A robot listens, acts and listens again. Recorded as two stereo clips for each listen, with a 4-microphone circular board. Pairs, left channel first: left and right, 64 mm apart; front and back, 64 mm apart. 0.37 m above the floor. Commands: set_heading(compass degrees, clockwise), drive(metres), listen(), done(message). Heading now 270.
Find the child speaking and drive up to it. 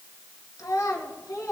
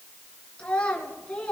set_heading(200)
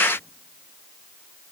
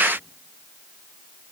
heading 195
listen()
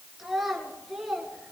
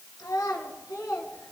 drive(1.0)
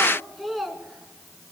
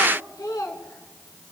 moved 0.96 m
drive(1.0)
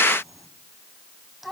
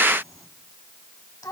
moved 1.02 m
drive(1.0)
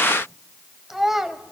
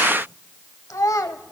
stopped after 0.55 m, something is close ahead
done("I am next to the child speaking.")